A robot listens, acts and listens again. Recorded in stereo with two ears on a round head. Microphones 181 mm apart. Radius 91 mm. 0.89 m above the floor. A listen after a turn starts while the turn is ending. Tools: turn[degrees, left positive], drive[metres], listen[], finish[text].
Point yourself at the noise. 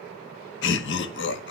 Thought: The laughter: about 65° left or 115° left.
Action: turn[65]
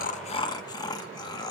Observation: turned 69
Thought: So it is at 25° left.
Action: turn[25]
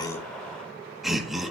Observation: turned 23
Action: finish[Found it: laughter, straight ahead.]